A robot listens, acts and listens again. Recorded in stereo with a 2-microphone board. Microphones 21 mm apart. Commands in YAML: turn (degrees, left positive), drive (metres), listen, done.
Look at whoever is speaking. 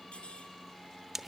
listen: true
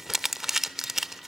listen: true
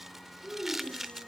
turn: -55
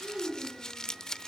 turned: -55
done: "Facing the child speaking, over 4 m away."